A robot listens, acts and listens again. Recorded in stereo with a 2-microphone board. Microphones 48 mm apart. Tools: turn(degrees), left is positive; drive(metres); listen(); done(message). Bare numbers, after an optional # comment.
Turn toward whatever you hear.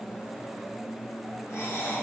# The breathing: about 75° left or 105° left.
turn(75)
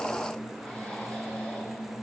listen()
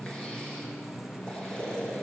# So it is at 20° left.
turn(20)
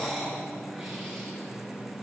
done("Found it: breathing, straight ahead, over 4 m away.")